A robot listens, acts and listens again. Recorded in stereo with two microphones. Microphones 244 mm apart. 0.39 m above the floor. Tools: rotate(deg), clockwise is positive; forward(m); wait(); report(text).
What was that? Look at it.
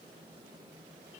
wait()
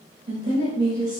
rotate(35)
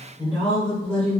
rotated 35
rotate(-10)
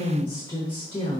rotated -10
rotate(-25)
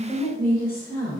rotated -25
rotate(-30)
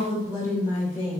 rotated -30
rotate(-15)
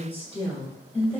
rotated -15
report("Facing the woman speaking.")